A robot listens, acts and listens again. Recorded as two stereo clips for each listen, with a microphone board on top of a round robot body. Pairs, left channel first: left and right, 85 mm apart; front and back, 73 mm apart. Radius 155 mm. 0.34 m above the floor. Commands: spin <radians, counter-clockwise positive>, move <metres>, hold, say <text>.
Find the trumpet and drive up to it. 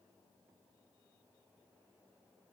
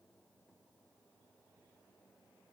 hold
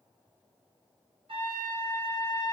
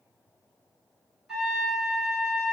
spin -1.66
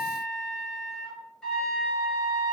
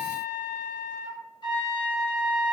spin 0.17
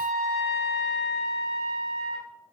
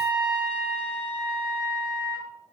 move 1.0
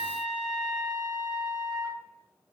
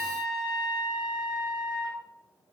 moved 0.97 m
move 1.0
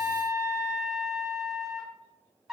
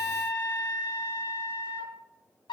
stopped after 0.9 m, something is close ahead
say I am next to the trumpet.